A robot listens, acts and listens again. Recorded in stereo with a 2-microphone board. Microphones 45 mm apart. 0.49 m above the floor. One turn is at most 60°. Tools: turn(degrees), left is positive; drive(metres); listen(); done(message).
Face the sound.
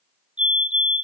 turn(degrees=-25)
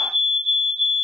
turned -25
done("Facing the fire alarm.")